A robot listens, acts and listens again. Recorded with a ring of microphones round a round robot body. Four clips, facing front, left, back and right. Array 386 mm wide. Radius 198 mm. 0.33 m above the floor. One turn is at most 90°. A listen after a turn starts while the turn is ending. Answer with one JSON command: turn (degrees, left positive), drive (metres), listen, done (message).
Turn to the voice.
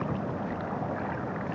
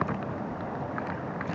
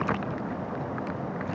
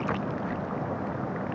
{"listen": true}
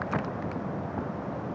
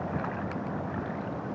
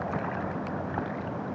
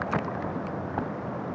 {"listen": true}
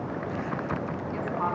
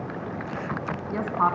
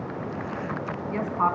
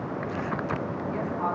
{"turn": 90}
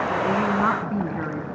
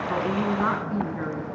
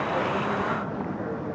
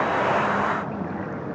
{"turn": 15}
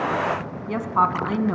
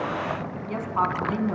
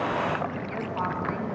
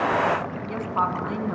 {"done": "Found it: a woman speaking, straight ahead, 2 to 4 m away."}